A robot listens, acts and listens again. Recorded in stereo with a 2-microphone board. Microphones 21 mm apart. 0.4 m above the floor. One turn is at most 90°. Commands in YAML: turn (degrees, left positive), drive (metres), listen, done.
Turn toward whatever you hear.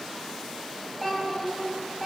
turn: 30
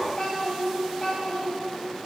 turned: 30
turn: 90
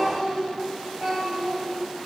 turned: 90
turn: 20
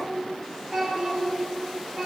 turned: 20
done: "Found it: a child speaking, straight ahead, 2 to 4 m away."